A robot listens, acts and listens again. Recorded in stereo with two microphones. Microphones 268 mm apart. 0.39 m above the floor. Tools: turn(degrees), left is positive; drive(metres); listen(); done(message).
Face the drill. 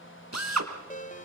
turn(degrees=-90)
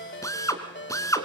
turn(degrees=10)
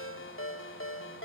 listen()
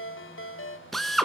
done("Found it: a drill, straight ahead, 2 to 4 m away.")